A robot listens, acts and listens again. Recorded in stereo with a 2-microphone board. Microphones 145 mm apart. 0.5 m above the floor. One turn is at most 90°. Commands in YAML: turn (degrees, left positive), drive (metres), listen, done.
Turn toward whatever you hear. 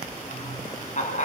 turn: 60
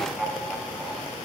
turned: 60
done: "Found it: laughter, straight ahead."